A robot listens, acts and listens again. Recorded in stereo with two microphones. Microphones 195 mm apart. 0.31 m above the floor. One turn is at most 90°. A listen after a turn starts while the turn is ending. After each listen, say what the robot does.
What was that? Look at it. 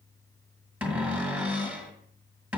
Turn 30° right.
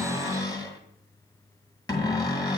Turn 20° left.
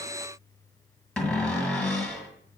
Found it: a cupboard door, straight ahead.